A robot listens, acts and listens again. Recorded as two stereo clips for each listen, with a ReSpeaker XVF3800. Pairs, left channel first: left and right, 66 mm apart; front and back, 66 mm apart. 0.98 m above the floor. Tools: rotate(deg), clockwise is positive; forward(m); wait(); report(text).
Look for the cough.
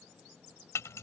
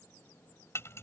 wait()
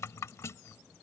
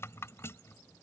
wait()
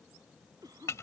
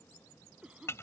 rotate(105)
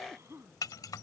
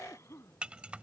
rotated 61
rotate(45)
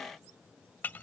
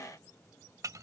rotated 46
wait()
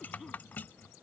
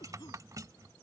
wait()
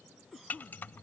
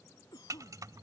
report("Facing the cough.")